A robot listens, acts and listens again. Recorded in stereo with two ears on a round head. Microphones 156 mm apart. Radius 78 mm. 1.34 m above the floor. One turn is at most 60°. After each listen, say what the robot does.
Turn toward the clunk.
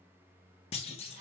Turn 35° left.
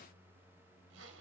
Keep listening.
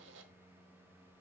I heard a clunk, but can't make it out now. It was about straight ahead or 110° left.